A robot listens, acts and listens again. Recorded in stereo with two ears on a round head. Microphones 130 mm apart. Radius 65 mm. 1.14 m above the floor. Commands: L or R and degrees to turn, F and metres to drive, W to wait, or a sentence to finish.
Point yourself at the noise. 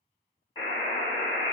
L25
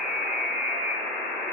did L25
Found it: a buzzer, straight ahead.